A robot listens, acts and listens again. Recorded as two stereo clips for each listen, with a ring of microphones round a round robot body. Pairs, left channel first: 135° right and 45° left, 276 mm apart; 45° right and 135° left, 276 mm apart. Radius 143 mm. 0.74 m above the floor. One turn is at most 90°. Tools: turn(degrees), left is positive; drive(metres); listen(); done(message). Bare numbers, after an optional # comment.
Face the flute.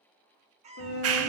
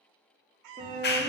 # The flute: 165° right.
turn(-90)
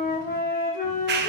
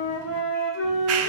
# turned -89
# The flute is now 75° right.
turn(-75)
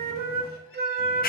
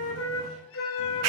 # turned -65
# The flute is now 10° right.
turn(-10)
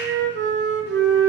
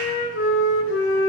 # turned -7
done("Found it: a flute, straight ahead, 1 to 2 m away.")